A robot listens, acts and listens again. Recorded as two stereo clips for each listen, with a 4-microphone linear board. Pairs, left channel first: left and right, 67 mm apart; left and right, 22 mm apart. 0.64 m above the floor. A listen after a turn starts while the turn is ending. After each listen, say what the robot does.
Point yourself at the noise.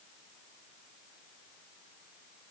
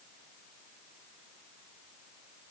Keep listening.
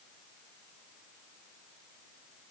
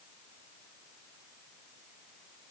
Keep listening.
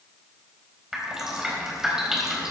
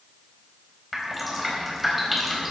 Turn 30° right.
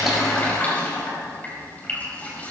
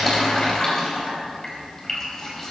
Turn 25° left.
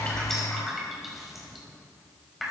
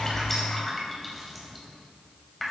Found it: dripping, straight ahead.